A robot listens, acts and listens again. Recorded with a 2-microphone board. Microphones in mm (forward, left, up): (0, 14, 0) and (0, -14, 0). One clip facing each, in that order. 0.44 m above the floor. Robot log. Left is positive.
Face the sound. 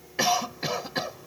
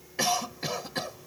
note: The cough: about 15° left or 165° left.
cmd yaw +15
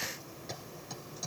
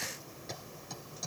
end: Facing the cough.